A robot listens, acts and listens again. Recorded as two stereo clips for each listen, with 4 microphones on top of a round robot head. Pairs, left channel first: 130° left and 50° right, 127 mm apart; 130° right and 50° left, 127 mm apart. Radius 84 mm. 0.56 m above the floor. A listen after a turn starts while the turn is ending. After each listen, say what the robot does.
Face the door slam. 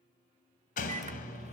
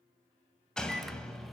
Turn 145° left.
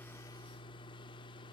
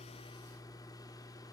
Facing where the door slam came from. I can't hear it now.